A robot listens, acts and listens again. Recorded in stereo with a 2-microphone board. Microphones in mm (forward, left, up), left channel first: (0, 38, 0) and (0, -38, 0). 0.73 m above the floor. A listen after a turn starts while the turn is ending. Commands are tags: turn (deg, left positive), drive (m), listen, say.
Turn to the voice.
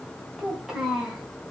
<turn deg="-30"/>
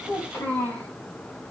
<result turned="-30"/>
<turn deg="25"/>
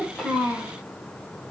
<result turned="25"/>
<turn deg="-20"/>
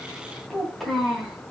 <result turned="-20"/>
<say>Facing the child speaking, 2 to 4 m away.</say>